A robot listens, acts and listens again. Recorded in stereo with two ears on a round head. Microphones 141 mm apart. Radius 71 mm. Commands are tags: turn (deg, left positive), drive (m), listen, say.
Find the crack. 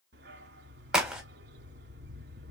<turn deg="-30"/>
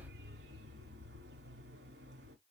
<listen/>
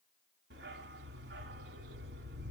<say>I heard a crack, but can't make it out now. It was about 25° left or 145° right.</say>